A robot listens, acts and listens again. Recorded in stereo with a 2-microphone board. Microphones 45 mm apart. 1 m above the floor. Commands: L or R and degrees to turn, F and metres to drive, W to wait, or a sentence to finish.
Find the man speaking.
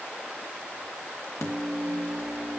W
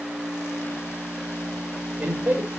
R30
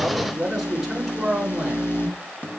R10
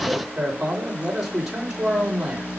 R10
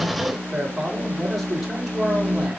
Found it: a man speaking, straight ahead.